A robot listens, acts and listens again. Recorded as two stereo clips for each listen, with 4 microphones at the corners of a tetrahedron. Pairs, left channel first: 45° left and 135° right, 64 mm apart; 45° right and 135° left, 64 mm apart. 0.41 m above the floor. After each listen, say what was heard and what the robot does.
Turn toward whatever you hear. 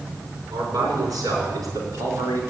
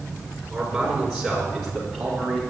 The man speaking: 125° right. Turn 125° right.
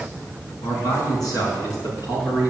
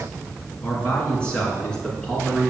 The man speaking is now 35° left. Turn 35° left.
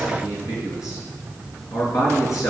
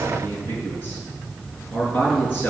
The man speaking is now 20° left. Turn 20° left.
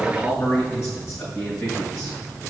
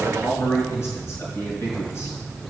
Facing the man speaking.